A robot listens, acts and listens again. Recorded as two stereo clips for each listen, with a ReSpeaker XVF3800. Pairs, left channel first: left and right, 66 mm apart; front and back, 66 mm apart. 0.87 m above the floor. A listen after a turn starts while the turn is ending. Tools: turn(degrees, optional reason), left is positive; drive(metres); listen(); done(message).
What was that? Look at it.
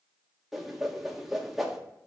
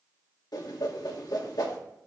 done("Facing the whoosh.")